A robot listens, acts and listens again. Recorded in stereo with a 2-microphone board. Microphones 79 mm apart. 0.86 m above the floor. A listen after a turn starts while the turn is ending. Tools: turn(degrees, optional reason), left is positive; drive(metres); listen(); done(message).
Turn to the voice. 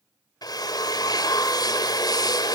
listen()
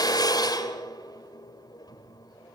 listen()
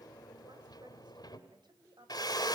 turn(degrees=-70, reason="The woman speaking: about 70° right or 110° right.")
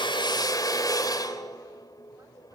listen()
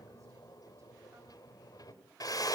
listen()
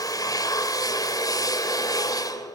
done("I heard a woman speaking, but can't make it out now. It was about straight ahead or 40° right.")